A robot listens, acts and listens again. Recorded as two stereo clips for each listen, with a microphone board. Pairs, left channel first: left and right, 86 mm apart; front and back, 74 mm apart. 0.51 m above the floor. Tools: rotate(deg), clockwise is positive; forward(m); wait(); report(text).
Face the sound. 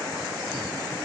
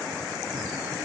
wait()
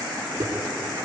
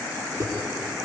rotate(140)
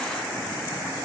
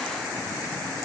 report("I heard a thud from this way, but can't make it out now.")